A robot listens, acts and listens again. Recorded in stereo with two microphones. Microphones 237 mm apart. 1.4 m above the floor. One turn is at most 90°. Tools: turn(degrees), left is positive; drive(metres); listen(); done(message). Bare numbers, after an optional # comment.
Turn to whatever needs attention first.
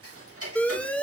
turn(30)
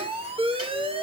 # So it is at 25° right.
turn(-25)
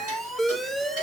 done("Facing the alarm, 1 to 2 m away.")